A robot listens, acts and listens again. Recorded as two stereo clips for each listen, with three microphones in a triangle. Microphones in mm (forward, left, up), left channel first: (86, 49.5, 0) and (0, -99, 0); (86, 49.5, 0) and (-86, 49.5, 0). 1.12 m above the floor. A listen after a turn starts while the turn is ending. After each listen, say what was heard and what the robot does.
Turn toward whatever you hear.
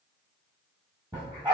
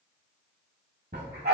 The dog barking: 175° left. Turn 175° left.
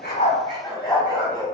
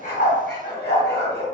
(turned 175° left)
Facing the dog barking.